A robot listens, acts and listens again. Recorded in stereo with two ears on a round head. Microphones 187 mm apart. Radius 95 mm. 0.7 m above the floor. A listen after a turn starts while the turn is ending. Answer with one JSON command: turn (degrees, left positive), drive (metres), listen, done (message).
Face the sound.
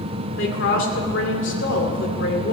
{"turn": 65}
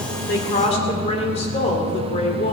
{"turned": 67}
{"turn": 35}
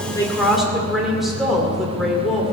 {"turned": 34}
{"done": "Found it: a woman speaking, straight ahead, 2 to 4 m away."}